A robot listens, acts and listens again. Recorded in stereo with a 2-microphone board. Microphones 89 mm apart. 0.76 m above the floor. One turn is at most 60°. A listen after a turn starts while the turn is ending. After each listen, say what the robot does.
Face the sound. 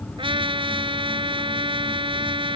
Turn 60° right.
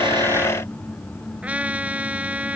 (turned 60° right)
Turn 15° right.
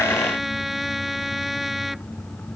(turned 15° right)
Facing the trumpet.